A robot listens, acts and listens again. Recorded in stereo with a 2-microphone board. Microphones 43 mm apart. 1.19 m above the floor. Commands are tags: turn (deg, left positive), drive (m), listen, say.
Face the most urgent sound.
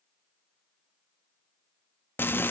<listen/>
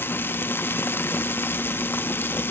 <listen/>
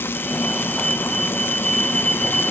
<turn deg="30"/>
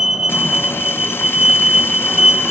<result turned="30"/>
<turn deg="-20"/>
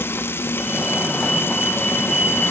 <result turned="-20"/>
<say>Found it: a fire alarm, straight ahead.</say>